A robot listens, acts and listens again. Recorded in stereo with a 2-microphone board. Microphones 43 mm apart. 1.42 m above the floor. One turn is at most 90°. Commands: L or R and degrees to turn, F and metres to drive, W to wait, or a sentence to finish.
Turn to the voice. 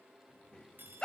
L20
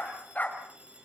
W
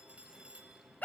W
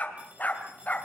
I heard a child speaking, but can't make it out now. It was about straight ahead or 140° left.